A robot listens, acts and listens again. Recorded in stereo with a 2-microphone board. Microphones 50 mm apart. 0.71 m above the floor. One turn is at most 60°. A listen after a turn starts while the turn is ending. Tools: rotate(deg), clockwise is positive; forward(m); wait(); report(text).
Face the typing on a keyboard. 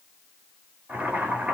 wait()
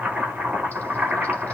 wait()
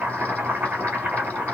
report("I can't make out typing on a keyboard to turn to.")